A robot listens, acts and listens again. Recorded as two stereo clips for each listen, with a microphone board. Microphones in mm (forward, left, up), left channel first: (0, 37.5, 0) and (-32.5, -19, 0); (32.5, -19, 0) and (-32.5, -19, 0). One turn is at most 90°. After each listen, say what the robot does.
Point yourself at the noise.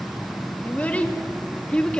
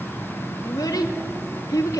Turn 15° right.
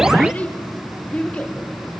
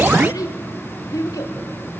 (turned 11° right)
Turn 10° right.
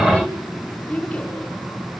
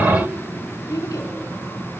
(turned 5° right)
Turn 10° right.
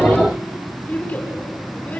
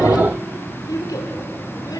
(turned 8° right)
Facing the child speaking.